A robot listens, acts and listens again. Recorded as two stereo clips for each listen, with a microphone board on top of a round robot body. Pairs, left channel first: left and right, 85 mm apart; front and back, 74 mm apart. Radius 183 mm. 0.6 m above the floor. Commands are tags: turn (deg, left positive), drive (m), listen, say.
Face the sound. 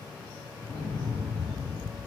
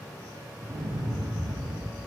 <turn deg="160"/>
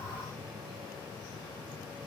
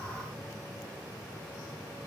<say>Facing where the explosion came from. I can't hear it now.</say>